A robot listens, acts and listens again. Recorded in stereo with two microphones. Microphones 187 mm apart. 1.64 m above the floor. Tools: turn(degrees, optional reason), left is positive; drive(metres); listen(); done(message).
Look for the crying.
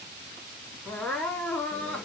turn(degrees=30)
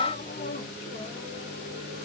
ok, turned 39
listen()
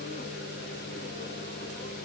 listen()
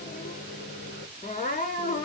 turn(degrees=135, reason="So it is at 135° left.")
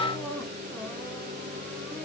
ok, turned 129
done("Facing the crying.")